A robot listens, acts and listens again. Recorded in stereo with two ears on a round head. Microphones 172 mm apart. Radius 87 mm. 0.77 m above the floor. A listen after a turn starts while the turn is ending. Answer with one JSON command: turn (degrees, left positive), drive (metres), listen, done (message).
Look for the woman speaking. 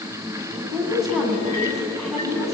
{"turn": 30}
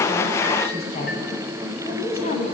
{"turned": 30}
{"turn": 145}
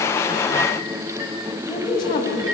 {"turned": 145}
{"turn": 20}
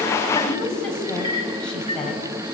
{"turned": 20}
{"done": "Found it: a woman speaking, straight ahead, over 4 m away."}